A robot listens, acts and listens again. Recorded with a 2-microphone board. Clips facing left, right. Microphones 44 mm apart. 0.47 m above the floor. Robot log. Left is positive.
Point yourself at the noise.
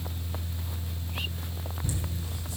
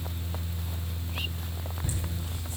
note: The laughter: about 40° right or 140° right.
cmd yaw -40
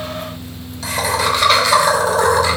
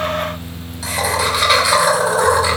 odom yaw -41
note: So it is at 10° right.
cmd yaw -10
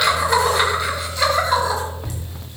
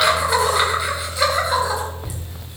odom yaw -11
end: Facing the laughter, 2 to 4 m away.